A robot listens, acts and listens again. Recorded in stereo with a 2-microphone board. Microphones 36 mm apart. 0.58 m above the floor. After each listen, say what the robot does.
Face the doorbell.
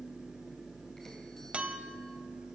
Keep listening.
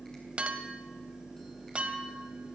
Keep listening.
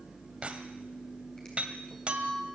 I can't make out a doorbell to turn to.